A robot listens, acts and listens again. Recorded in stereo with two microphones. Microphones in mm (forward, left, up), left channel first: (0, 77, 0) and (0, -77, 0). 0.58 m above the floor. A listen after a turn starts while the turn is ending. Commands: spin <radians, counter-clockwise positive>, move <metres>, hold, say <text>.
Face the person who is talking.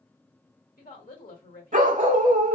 spin 1.13
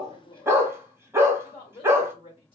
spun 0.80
spin 0.70
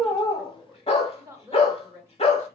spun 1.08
spin -0.35
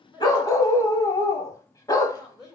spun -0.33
say Found it: a woman speaking, straight ahead.